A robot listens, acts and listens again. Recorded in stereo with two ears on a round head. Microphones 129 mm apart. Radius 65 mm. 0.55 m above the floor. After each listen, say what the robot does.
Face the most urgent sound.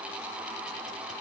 Keep listening.
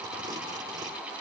Keep listening.
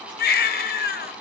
Turn 75° left.
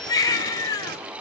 Turn 25° left.
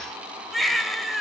Found it: a baby crying, straight ahead.